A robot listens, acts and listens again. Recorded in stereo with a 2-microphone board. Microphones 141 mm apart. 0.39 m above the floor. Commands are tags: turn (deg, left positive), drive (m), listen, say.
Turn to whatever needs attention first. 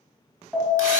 <turn deg="30"/>
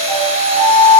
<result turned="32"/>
<turn deg="140"/>
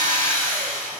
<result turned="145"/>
<listen/>
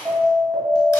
<say>Facing the alarm, 1 to 2 m away.</say>